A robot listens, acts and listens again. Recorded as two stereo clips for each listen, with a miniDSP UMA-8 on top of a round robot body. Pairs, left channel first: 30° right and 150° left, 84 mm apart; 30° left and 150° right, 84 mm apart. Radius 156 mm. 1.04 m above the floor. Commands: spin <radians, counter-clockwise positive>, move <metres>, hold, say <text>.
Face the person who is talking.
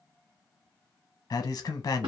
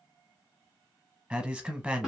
spin -1.22
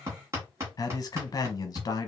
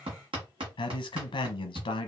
spin 0.26
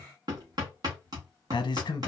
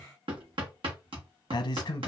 say Facing the man speaking, under 1 m away.